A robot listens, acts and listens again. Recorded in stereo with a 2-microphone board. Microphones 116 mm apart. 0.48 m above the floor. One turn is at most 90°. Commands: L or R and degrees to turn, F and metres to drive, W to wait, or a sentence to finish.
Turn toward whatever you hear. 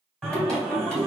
L30
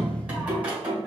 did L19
R10
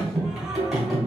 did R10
Facing the singing, 1 to 2 m away.